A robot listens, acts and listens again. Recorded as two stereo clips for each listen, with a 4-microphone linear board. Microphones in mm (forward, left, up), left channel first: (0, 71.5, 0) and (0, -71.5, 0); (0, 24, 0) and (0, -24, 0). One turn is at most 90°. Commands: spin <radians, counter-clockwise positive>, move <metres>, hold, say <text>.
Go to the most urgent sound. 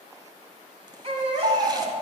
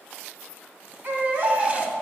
spin -0.79
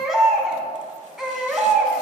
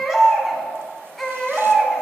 move 1.0
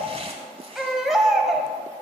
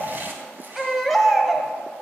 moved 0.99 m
move 1.0
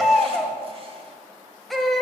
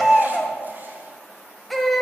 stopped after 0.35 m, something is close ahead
say I am next to the baby crying.